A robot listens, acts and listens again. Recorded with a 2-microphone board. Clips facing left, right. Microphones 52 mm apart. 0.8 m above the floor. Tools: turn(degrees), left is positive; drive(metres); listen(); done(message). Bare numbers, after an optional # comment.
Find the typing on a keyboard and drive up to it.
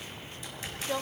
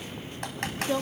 # The typing on a keyboard: about 75° right or 105° right.
turn(-75)
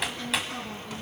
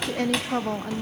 drive(1.0)
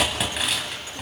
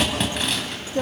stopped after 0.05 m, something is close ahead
done("Something is in my way. I am facing the typing on a keyboard but have not reached it.")